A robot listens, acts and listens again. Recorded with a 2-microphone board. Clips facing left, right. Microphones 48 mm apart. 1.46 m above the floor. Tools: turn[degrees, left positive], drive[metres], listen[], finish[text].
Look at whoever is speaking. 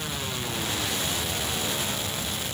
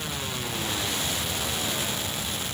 Action: listen[]
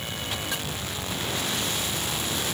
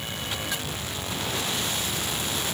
Action: listen[]
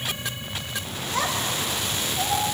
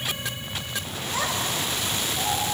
Action: turn[30]
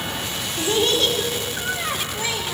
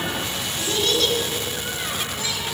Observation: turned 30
Thought: So it is at 150° left.
Action: turn[150]
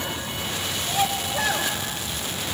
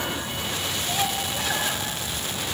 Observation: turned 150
Thought: The child speaking is now 50° left.
Action: turn[50]
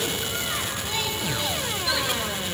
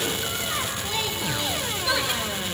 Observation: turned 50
Action: finish[Found it: a child speaking, straight ahead, 2 to 4 m away.]